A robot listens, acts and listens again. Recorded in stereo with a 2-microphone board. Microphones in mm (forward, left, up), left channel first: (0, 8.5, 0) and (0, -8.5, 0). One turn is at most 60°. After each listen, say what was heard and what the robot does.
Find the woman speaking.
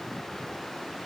Keep listening.
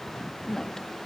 The woman speaking: about 35° left or 145° left. Turn 35° left.
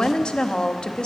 So it is at 105° left. Turn 60° left.
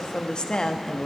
The woman speaking is now 60° left. Turn 60° left.
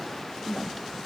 Facing the woman speaking, under 1 m away.